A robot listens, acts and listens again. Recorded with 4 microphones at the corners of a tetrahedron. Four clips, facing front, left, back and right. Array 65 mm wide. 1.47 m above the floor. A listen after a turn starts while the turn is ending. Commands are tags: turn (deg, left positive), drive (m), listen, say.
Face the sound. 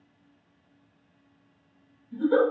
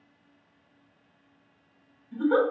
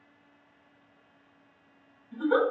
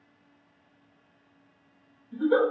<turn deg="140"/>
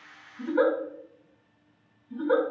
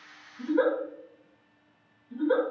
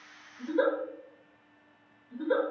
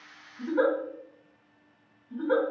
<turn deg="-20"/>
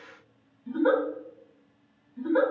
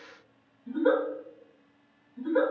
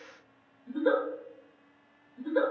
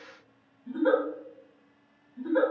<say>Facing the giggle, 1 to 2 m away.</say>